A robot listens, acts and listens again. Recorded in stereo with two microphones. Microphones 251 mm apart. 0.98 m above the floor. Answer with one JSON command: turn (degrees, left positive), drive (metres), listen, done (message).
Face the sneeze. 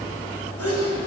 {"turn": -65}
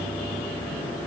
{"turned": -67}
{"listen": true}
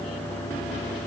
{"done": "I heard a sneeze, but can't make it out now. It was about straight ahead or 45° right."}